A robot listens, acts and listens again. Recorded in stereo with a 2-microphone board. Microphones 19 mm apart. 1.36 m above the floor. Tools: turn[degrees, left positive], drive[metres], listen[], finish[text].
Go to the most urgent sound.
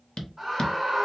Thought: The scream: about 20° right or 160° right.
Action: turn[-20]
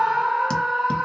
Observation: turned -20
Thought: So it is at 140° right.
Action: turn[-140]
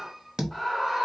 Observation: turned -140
Action: drive[1.0]
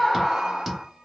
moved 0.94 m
Thought: The scream is now 10° left.
Action: turn[10]
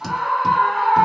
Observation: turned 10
Action: drive[1.0]
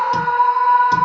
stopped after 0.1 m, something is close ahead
Action: finish[I am next to the scream.]